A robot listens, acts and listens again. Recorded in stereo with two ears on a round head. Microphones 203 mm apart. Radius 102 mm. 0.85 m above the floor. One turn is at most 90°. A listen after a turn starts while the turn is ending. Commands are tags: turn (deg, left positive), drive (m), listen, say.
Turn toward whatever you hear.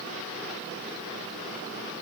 <listen/>
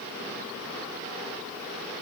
<listen/>
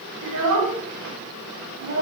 <turn deg="-90"/>
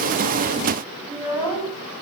<say>Found it: a child speaking, straight ahead, over 4 m away.</say>